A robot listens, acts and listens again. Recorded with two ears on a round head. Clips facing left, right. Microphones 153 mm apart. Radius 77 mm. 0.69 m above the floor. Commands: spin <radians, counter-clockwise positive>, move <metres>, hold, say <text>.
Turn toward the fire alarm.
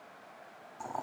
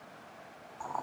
hold
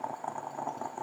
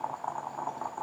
hold
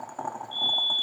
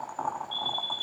spin 0.52
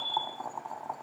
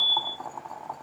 spin 2.71
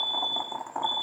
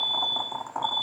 spin -0.61
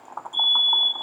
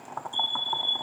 say Facing the fire alarm.